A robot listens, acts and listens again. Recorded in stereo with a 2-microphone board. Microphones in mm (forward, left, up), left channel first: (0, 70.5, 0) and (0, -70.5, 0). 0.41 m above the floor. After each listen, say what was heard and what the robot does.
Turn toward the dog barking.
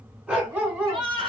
Turn 30° right.
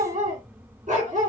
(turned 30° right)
So it is at 115° right. Turn 115° right.
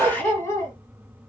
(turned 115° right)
The dog barking is now 25° left. Turn 25° left.
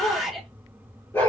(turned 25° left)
The dog barking is now 15° left. Turn 15° left.
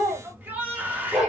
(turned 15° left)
Found it: a dog barking, straight ahead, 2 to 4 m away.